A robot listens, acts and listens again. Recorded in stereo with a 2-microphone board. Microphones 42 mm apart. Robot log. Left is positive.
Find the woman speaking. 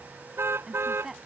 cmd yaw -30
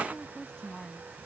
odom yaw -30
note: So it is at 20° left.
cmd yaw +20
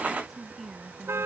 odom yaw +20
end: Found it: a woman speaking, straight ahead.